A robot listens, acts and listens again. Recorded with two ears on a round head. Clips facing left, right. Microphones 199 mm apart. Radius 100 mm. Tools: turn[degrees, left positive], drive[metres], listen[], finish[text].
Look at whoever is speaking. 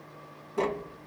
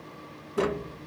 Action: listen[]
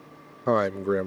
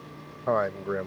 Thought: The man speaking: about 45° left or 135° left.
Action: turn[45]
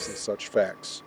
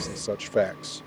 Action: finish[Found it: a man speaking, straight ahead.]